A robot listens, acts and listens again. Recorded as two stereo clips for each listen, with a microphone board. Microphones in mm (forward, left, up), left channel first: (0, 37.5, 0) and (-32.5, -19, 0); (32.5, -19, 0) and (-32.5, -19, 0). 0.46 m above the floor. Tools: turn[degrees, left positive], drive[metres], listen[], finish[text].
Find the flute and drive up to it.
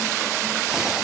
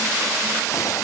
Action: listen[]
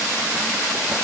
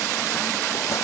Action: listen[]
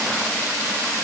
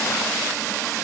Action: finish[I can't make out a flute.]